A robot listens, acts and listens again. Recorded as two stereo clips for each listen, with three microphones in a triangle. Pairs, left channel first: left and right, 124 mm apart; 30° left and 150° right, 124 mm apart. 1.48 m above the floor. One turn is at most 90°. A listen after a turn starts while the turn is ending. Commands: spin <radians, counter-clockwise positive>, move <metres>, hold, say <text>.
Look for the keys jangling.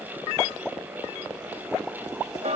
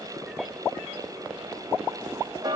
hold
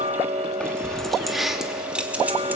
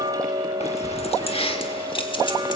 spin -0.26
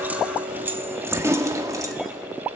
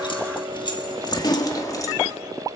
spin -0.52
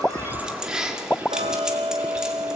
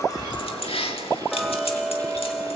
say Facing the keys jangling.